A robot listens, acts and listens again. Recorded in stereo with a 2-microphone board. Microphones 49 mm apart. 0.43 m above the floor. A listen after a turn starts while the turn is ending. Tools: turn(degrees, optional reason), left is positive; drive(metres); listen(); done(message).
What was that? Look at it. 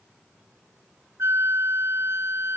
turn(degrees=-65, reason="The flute: about 65° right or 115° right.")
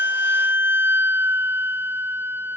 turn(degrees=-50, reason="So it is at 50° right.")
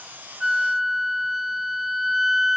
done("Found it: a flute, straight ahead.")